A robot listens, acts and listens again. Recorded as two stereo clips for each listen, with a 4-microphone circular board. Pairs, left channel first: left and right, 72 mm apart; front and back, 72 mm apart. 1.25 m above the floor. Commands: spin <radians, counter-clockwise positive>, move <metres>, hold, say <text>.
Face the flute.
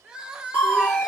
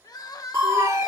spin -2.97
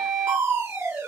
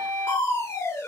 say Facing the flute, 1 to 2 m away.